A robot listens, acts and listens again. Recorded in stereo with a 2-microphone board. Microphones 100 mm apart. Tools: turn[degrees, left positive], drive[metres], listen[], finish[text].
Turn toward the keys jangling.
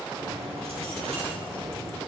Action: turn[-90]
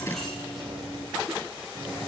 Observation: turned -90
Action: finish[Found it: keys jangling, straight ahead, over 4 m away.]